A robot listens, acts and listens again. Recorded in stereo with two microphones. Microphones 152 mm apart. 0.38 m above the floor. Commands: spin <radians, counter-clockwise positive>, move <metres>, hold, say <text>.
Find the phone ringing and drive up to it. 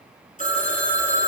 spin 0.96
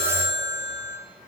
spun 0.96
spin 1.13
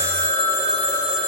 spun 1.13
move 1.0
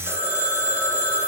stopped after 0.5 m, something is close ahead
spin -0.17
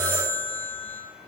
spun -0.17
say Blocked. The phone ringing is further on, straight ahead.